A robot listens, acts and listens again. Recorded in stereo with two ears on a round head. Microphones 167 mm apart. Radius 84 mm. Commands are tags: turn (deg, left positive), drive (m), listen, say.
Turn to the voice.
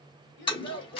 <turn deg="70"/>
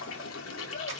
<listen/>
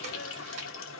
<listen/>
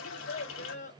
<turn deg="40"/>
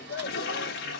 <turn deg="15"/>
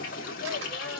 <listen/>
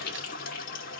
<listen/>
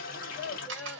<say>Found it: a child speaking, straight ahead.</say>